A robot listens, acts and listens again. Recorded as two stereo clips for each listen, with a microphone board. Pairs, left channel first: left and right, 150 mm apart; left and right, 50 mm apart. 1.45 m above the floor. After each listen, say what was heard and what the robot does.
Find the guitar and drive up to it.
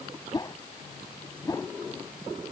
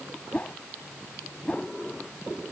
Keep listening.
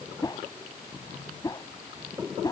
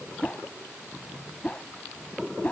Keep listening.
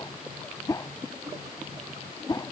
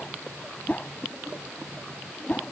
I can't make out a guitar to turn to.